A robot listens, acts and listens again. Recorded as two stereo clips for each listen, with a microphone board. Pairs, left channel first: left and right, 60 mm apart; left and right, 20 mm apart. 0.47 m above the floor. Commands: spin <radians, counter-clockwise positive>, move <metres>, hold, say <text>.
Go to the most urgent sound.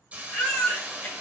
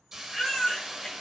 spin 0.26
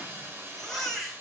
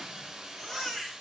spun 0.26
move 1.0
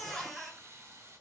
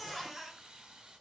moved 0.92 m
move 1.0
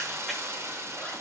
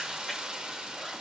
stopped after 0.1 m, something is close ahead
hold
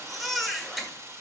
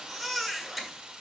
say I am next to the baby crying.